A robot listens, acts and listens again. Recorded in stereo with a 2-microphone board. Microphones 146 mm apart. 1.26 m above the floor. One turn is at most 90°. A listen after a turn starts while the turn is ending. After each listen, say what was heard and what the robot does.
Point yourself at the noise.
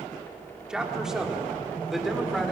Turn 30° left.
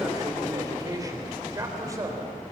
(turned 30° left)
So it is at 25° right. Turn 25° right.
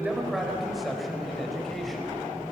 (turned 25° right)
Found it: a man speaking, straight ahead, over 4 m away.